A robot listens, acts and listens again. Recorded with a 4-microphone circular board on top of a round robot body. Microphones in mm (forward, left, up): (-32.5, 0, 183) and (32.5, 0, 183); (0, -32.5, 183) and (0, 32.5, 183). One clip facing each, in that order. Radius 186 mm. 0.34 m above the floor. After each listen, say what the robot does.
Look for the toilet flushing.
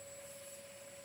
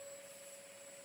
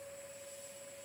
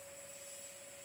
Keep listening.
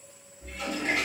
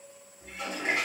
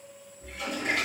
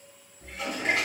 Turn 60° left.
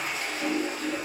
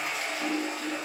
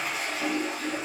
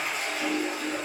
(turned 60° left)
Found it: a toilet flushing, straight ahead, 1 to 2 m away.